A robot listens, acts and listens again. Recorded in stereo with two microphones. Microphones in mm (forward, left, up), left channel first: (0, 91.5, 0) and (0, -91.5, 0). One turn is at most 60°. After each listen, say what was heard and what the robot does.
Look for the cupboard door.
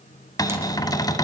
The cupboard door: about 20° left or 160° left. Turn 20° left.
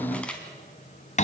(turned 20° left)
So it is at 140° left. Turn 60° left.
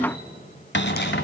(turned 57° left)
The cupboard door is now 80° left. Turn 60° left.
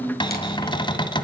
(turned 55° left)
The cupboard door is now 25° left. Turn 25° left.
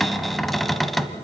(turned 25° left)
Facing the cupboard door.